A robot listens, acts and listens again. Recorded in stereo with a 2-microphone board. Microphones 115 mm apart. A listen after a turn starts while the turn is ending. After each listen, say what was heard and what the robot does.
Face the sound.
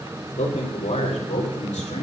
Turn 90° left.
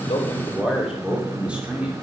So it is at 10° right. Turn 10° right.
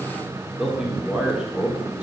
The man speaking is now 10° right. Turn 10° right.
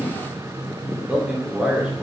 The man speaking is now 10° right. Turn 10° right.
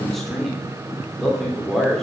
Found it: a man speaking, straight ahead.